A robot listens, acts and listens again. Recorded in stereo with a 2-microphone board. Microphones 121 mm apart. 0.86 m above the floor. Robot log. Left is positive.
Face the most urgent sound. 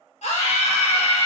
note: The scream: about 65° left or 115° left.
cmd yaw +65
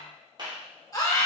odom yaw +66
note: So it is at 30° left.
cmd yaw +30
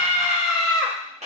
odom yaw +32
end: Facing the scream.